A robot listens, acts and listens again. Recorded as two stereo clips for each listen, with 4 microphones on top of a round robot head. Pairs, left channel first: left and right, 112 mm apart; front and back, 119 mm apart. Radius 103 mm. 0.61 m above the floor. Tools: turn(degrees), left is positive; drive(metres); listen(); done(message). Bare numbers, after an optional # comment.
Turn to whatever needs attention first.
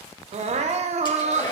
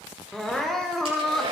# The crying: 90° right.
turn(-90)
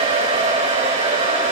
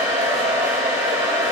listen()
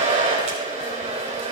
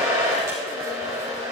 listen()
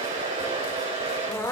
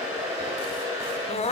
# The crying is now 25° left.
turn(25)
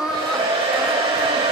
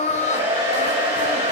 done("Found it: crying, straight ahead, 1 to 2 m away.")